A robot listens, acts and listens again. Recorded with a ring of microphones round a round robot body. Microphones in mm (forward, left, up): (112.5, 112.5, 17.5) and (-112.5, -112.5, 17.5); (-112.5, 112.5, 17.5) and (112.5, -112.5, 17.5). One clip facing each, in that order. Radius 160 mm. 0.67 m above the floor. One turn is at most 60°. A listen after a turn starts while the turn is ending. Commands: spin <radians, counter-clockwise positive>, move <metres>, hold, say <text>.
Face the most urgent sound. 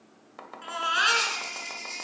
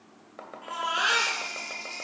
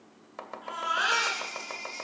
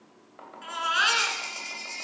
say Facing the baby crying, over 4 m away.